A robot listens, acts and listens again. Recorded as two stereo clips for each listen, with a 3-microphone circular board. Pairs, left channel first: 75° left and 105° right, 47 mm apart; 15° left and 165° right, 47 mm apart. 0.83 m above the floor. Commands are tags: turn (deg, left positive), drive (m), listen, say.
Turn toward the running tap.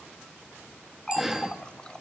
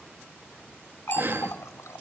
<say>Found it: a running tap, straight ahead.</say>